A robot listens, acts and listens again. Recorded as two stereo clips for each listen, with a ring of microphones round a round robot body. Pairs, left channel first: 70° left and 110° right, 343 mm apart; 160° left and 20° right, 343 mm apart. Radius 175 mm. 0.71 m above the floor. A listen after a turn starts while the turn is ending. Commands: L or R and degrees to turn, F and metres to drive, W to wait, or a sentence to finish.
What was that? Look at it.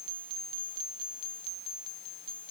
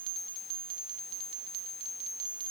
W
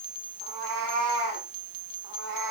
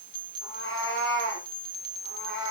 R145
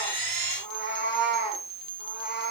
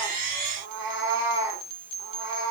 R50
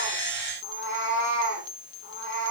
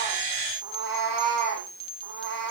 L10
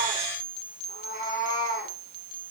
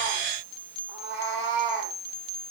Found it: a cat meowing, straight ahead, 2 to 4 m away.